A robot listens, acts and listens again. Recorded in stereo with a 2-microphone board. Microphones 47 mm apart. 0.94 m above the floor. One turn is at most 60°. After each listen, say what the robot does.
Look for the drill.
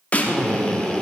Turn 15° left.
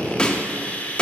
Turn 60° left.
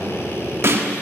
Turn 60° left.
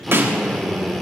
Facing the drill, 2 to 4 m away.